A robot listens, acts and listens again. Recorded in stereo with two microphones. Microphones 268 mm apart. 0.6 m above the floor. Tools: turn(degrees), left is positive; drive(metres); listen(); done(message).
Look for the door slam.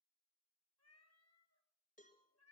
listen()
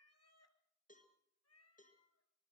listen()
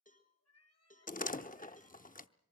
turn(degrees=30)
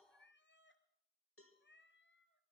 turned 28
listen()
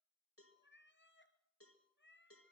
done("I heard a door slam, but can't make it out now. It was about 5° left or 120° left.")